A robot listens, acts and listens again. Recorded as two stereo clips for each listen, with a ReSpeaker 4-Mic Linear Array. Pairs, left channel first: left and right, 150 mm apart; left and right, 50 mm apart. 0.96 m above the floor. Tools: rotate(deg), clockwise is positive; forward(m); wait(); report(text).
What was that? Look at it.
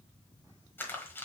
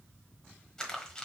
rotate(-30)
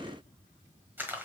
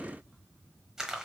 rotate(15)
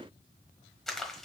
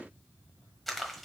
report("Facing the crumpling, 1 to 2 m away.")